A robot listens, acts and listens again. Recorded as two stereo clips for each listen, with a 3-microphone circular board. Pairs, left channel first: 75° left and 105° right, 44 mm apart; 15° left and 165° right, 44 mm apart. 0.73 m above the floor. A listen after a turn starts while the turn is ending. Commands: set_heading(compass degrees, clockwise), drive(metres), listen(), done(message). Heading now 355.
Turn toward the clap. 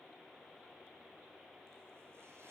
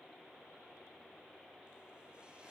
listen()
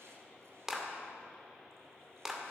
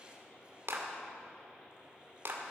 set_heading(180)
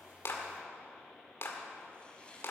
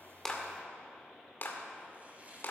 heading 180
set_heading(125)
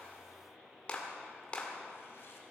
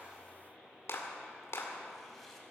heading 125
set_heading(110)
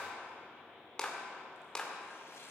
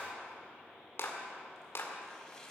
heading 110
done("Found it: a clap, straight ahead, 2 to 4 m away.")